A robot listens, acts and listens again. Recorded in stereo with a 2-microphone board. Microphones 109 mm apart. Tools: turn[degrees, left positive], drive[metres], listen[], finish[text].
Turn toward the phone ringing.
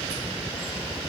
Action: listen[]
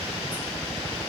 Action: listen[]
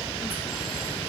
Action: finish[I can't make out a phone ringing to turn to.]